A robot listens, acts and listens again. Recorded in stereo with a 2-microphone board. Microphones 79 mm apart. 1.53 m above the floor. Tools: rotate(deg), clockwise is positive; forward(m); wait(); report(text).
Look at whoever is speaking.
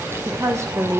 rotate(40)
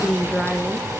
report("Found it: a woman speaking, straight ahead.")